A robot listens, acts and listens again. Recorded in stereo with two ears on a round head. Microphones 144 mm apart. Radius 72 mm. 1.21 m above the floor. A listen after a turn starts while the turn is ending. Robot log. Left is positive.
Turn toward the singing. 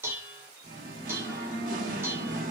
note: The singing: about 55° right or 125° right.
cmd yaw -55
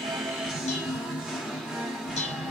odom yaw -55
end: Facing the singing.